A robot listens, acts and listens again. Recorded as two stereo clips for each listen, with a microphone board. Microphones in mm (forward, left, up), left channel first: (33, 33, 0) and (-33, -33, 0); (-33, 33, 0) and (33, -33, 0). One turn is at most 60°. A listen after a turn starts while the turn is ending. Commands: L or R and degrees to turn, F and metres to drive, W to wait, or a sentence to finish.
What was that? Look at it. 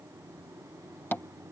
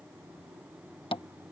L60
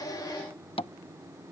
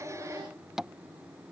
L40
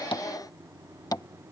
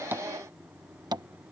Found it: tapping, straight ahead.